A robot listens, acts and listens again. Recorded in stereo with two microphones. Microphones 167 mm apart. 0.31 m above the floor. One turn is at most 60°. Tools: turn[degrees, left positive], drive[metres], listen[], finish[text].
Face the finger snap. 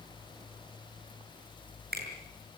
Thought: The finger snap: about 70° right or 110° right.
Action: turn[-60]
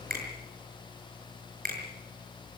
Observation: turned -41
Thought: So it is at 65° right.
Action: turn[-60]
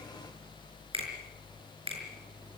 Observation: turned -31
Thought: The finger snap is now 35° right.
Action: turn[-35]
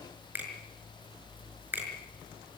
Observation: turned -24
Thought: The finger snap is now 10° right.
Action: turn[-10]
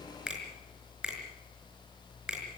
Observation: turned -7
Action: finish[Found it: a finger snap, straight ahead.]